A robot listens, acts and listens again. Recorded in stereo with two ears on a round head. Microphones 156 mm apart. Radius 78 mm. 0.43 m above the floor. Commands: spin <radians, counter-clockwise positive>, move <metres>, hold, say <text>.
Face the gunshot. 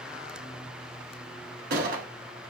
spin -0.96
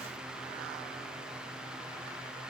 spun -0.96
hold
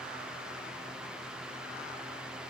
say I heard a gunshot, but can't make it out now. It was about straight ahead or 70° right.